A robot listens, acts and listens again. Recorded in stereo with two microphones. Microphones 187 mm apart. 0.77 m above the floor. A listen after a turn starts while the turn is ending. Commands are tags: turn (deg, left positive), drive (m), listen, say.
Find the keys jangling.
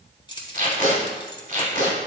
<turn deg="25"/>
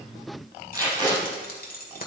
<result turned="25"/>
<turn deg="130"/>
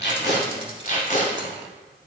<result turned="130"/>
<listen/>
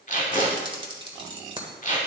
<turn deg="-25"/>
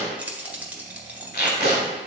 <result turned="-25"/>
<turn deg="-10"/>
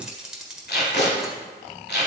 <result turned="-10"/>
<say>Found it: keys jangling, straight ahead.</say>